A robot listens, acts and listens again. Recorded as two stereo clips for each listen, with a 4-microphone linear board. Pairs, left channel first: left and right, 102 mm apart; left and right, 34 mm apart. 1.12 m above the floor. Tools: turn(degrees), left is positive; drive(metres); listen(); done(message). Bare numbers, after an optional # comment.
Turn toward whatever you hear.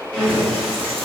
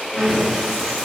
turn(30)
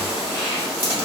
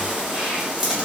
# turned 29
# So it is at 15° right.
turn(-15)
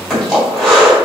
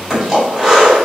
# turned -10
done("Found it: breathing, straight ahead.")